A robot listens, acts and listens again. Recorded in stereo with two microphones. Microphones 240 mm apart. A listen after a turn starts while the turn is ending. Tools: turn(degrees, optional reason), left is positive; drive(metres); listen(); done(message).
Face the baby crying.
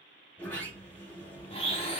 listen()
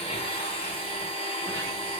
listen()
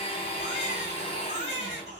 turn(degrees=-30, reason="The baby crying: about 30° right or 150° right.")
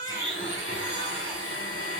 listen()
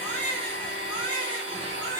done("Facing the baby crying, 1 to 2 m away.")